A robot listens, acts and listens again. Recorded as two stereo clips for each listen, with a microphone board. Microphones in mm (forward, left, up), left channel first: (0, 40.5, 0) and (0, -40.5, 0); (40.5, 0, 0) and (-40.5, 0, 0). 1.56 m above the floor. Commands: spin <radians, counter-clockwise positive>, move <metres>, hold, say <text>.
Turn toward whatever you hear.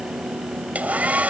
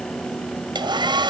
spin -2.79
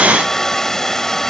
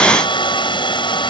say Found it: a hair dryer, straight ahead.